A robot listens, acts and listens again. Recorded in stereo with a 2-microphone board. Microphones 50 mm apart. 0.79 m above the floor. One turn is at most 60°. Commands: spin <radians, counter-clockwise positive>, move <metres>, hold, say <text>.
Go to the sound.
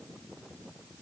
hold
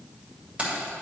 spin -0.52
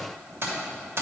spin -1.05
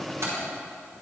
spin -1.05
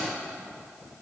hold
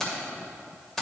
spin 0.17
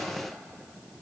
hold
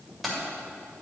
move 1.0
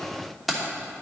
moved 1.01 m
move 1.0
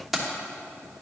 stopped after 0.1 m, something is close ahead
say I am next to the keys jangling.